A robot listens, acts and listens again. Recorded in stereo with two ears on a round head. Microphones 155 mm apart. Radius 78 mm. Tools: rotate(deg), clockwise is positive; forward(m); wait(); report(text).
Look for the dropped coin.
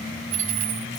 rotate(40)
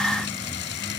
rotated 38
wait()
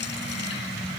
report("I heard a dropped coin, but can't make it out now. It was about 5° right or 100° right.")